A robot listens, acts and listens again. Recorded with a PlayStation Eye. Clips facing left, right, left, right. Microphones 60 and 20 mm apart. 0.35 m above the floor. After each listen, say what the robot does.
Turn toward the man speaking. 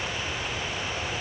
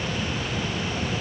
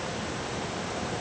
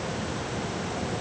Keep listening.
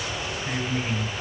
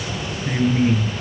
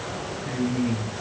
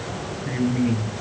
Turn 15° right.
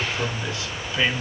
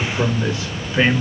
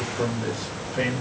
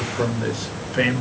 Turn 30° right.
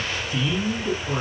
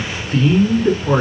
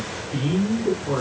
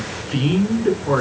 Turn 125° right.
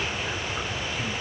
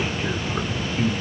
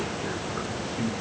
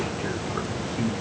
Turn 25° right.
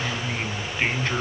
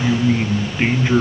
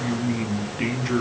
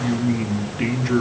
Turn 10° right.
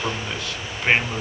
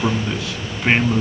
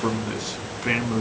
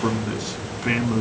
Facing the man speaking.